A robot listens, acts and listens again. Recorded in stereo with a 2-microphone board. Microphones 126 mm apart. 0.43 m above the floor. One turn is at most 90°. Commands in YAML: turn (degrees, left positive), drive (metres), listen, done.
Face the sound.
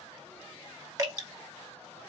turn: -25
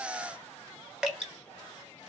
done: "Facing the dripping."